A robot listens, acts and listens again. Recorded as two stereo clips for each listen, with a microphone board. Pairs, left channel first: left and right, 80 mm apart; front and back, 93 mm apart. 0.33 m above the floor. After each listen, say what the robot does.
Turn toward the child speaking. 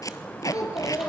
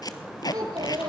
Turn 130° left.
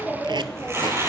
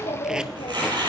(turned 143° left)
Turn 15° right.
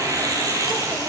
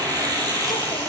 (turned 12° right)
Keep listening.
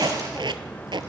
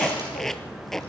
Keep listening.
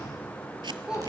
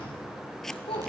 Turn 10° right.
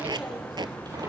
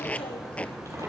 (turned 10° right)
Keep listening.
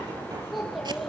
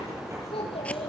Facing the child speaking, over 4 m away.